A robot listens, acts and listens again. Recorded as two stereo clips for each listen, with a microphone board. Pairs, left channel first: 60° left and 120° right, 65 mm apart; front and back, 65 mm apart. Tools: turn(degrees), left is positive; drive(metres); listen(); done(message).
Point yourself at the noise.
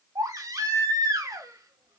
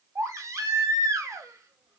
turn(degrees=-140)
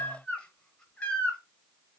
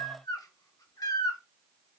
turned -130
turn(degrees=-10)
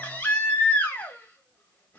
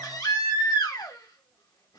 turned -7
done("Facing the baby crying.")